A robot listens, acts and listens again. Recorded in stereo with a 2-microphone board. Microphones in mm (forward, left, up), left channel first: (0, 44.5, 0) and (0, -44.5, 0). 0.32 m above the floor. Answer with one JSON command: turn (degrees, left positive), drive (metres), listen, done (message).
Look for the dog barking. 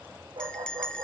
{"turn": -70}
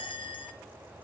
{"listen": true}
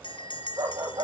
{"turn": -45}
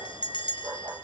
{"turn": -30}
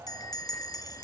{"listen": true}
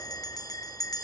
{"listen": true}
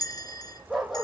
{"done": "Facing the dog barking."}